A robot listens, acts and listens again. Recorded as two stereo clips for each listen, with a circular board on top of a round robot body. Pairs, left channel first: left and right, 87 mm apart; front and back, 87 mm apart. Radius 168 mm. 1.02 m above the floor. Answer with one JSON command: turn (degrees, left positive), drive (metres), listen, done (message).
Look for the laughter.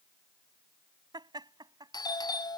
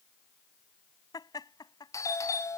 {"turn": -45}
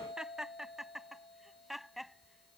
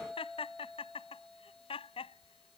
{"done": "Found it: laughter, straight ahead."}